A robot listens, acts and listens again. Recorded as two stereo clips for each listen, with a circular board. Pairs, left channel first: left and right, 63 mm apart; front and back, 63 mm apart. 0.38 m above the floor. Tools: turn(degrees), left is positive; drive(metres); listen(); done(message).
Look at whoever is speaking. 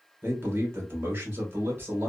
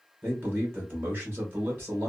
turn(degrees=-140)
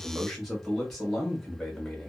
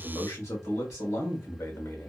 done("Facing the man speaking.")